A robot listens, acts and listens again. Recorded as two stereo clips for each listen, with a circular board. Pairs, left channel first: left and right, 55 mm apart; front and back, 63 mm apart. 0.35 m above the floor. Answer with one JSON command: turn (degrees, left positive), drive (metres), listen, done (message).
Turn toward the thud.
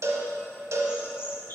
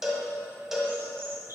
{"listen": true}
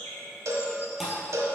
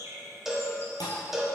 {"done": "Facing the thud, 2 to 4 m away."}